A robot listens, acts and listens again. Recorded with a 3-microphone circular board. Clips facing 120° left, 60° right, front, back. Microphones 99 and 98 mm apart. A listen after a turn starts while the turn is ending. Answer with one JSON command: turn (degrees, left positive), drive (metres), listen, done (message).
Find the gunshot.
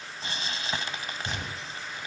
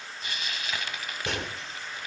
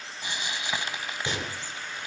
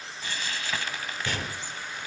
{"turn": -70}
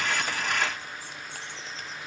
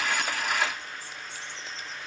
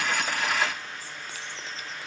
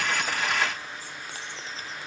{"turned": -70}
{"done": "I heard a gunshot from this way, but can't make it out now."}